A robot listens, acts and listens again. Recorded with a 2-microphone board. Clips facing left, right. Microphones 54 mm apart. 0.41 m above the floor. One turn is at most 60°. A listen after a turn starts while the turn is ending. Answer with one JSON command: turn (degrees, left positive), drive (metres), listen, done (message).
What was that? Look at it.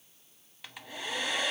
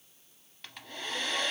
{"turn": 30}
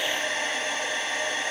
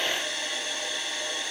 {"turn": 60}
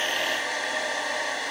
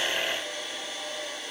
{"turn": 60}
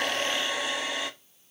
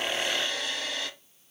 {"turn": 20}
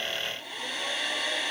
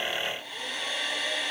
{"done": "Facing the hair dryer, under 1 m away."}